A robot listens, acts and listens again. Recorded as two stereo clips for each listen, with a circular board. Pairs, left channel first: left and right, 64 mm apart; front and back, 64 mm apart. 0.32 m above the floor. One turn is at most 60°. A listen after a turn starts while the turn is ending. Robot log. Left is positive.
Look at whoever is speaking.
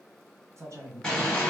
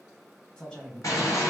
note: The man speaking: 70° right.
cmd yaw -60
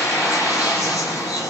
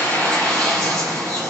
note: Nothing new. It was at 10° right.
cmd yaw -10
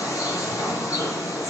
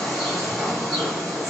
cmd idle
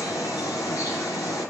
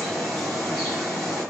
end: Facing where the man speaking came from. I can't hear it now.